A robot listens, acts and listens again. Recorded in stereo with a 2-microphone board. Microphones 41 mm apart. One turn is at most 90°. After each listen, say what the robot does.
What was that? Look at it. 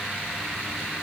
Keep listening.
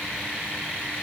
Keep listening.
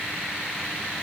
I can't make out anything to turn to.